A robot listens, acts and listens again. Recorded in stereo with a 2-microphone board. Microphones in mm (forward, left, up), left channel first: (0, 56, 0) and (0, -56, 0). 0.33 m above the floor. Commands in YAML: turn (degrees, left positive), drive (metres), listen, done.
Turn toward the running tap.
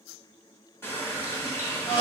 turn: 20
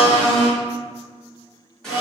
turn: 10
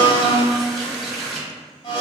done: "Found it: a running tap, straight ahead, 1 to 2 m away."